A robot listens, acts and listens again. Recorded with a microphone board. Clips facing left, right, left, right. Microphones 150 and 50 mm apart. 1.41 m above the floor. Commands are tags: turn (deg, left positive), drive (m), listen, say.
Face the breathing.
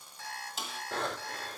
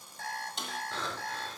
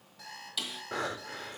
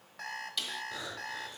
<turn deg="65"/>
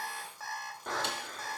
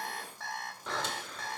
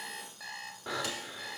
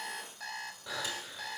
<turn deg="55"/>
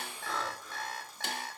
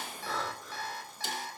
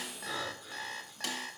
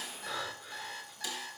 <say>Found it: breathing, straight ahead.</say>